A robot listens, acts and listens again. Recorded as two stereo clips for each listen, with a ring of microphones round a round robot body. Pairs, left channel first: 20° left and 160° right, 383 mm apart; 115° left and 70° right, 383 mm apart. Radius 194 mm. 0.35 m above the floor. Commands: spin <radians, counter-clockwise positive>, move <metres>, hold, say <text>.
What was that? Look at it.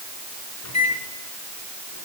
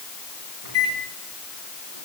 spin -0.44
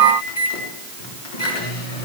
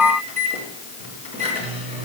say Facing the microwave.